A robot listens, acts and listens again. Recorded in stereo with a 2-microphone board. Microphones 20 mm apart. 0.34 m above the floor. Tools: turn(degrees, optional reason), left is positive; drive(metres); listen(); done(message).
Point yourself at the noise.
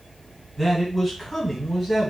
turn(degrees=30)
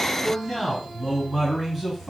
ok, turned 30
turn(degrees=-15, reason="So it is at 15° right.")
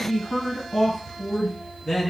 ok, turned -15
done("Facing the man speaking, 2 to 4 m away.")